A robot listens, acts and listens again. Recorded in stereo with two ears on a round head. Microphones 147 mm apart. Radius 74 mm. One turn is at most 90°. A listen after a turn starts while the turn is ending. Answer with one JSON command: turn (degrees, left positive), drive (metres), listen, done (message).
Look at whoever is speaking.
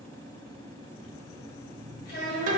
{"turn": 60}
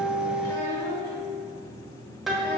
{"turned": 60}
{"listen": true}
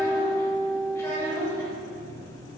{"turn": 20}
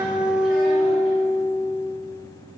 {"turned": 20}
{"listen": true}
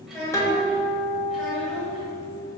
{"done": "Facing the child speaking."}